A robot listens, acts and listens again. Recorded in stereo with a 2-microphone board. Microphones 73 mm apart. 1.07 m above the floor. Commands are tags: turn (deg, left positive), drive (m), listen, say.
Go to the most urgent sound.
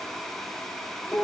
<listen/>
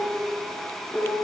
<listen/>
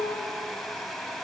<say>I can't make out anything urgent to turn to.</say>